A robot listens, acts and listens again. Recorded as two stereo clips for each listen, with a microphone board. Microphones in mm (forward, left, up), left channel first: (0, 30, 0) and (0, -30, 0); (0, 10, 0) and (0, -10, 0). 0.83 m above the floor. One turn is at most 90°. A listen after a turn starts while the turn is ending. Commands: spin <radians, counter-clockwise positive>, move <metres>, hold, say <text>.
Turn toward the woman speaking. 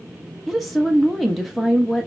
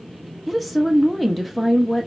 spin 0.52
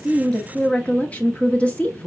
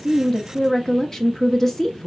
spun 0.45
spin 1.57
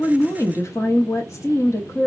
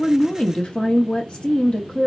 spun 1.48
spin 1.22
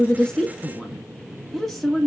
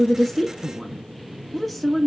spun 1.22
say Found it: a woman speaking, straight ahead, under 1 m away.